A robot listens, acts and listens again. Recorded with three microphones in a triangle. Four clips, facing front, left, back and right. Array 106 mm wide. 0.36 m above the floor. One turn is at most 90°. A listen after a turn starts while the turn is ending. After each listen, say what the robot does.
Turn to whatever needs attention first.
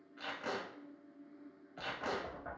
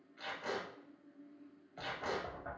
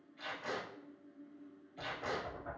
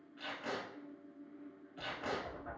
Keep listening.
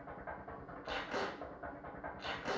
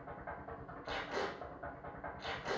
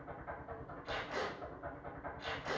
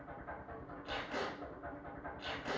Keep listening.
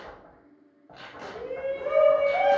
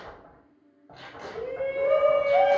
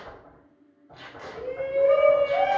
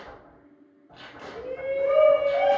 Turn 90° left.
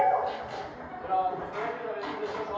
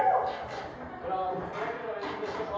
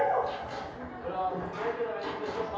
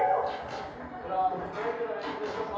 Turn 15° left.
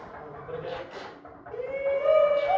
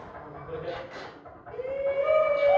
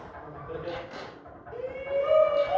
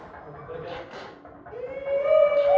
Found it: a shout, straight ahead.